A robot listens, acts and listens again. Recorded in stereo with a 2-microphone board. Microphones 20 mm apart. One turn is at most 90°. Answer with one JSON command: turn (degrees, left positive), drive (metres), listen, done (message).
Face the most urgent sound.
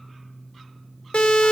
{"turn": 90}
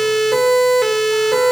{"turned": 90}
{"done": "Facing the siren."}